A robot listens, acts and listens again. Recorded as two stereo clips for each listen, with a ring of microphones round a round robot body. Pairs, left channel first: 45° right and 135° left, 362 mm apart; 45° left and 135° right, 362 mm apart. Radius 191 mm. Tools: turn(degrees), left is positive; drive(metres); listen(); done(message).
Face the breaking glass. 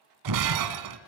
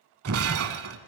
turn(degrees=175)
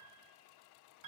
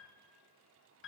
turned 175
done("I heard breaking glass from this way, but can't make it out now.")